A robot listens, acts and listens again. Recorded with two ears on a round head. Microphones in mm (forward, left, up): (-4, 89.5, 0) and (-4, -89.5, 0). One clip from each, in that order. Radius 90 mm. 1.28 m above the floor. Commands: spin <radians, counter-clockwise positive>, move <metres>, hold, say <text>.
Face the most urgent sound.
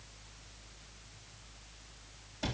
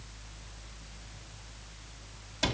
hold
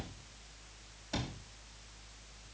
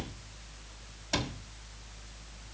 hold
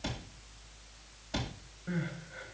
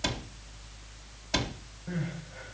spin 0.79
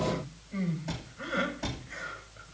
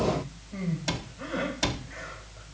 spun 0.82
spin 1.48
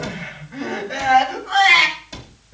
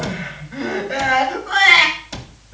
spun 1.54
say Facing the crying.